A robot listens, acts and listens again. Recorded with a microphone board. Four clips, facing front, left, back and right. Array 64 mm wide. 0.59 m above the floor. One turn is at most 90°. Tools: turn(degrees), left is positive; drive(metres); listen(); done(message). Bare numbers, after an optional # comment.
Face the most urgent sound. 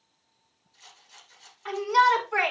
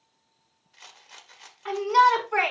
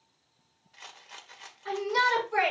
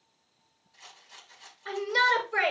# The shout: 60° left.
turn(60)
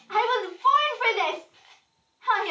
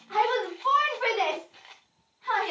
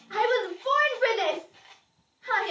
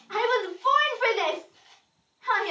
done("Facing the shout, over 4 m away.")